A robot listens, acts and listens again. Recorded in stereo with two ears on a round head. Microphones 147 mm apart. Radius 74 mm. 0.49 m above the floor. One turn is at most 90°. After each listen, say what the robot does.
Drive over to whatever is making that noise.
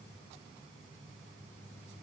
Keep listening.
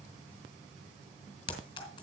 Turn 30° left.
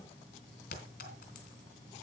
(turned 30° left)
Turn 90° left.
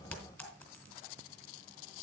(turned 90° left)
Turn 15° left.
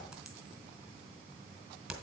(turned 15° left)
Drive 1.0 m forward.
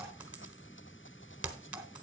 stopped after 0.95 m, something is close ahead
Turn 10° right.
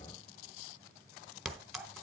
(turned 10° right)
Arrived at the clink, straight ahead.